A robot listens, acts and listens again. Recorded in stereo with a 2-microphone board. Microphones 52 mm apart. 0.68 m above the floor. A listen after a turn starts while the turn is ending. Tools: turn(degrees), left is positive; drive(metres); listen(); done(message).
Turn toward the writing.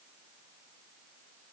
listen()
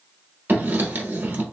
turn(degrees=-40)
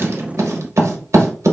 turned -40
turn(degrees=-100)
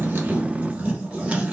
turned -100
turn(degrees=-30)
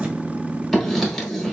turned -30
done("Found it: writing, straight ahead, under 1 m away.")